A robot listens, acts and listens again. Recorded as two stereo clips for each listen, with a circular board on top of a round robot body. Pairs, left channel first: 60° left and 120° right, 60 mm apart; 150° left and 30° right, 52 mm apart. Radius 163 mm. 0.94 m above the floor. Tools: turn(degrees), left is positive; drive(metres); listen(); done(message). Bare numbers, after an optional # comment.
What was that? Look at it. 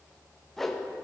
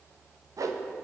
# The whoosh: 25° right.
turn(-25)
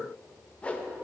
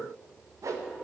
# The whoosh is now 10° right.
turn(-10)
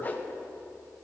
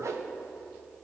done("Facing the whoosh.")